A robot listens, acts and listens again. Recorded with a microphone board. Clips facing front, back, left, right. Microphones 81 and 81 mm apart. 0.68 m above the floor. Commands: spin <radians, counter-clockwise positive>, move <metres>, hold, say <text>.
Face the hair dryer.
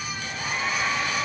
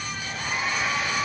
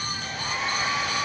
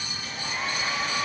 spin 1.75
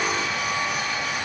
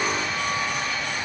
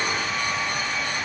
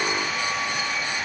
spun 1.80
say Found it: a hair dryer, straight ahead.